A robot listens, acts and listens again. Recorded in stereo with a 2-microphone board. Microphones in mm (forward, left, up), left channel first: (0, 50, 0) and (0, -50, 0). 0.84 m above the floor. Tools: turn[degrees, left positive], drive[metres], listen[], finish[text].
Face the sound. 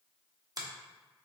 Thought: The finger snap: about 40° right or 140° right.
Action: turn[-40]
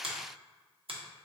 Thought: So it is at 95° right.
Action: turn[-95]
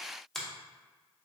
Action: finish[Found it: a finger snap, straight ahead, under 1 m away.]